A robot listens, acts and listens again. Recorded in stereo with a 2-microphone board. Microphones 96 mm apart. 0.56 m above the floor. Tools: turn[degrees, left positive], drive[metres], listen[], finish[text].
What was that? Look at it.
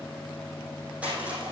Action: turn[-30]
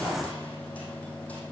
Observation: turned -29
Action: listen[]
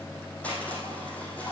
Thought: So it is at 15° left.
Action: turn[15]
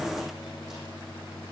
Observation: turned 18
Action: listen[]
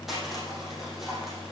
Action: finish[Found it: crushing, straight ahead, over 4 m away.]